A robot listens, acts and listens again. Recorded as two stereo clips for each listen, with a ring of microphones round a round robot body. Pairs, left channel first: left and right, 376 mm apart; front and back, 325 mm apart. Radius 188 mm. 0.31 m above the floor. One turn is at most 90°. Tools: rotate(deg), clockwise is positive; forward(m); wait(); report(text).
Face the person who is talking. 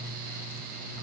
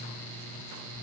wait()
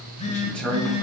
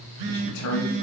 report("Found it: a man speaking, straight ahead.")